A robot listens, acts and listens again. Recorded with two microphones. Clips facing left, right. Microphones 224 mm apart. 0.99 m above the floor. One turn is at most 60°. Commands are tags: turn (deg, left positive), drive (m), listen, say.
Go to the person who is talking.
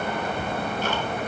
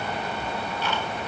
<listen/>
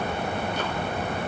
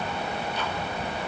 <listen/>
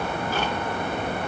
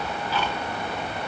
<say>I can't make out anyone speaking to turn to.</say>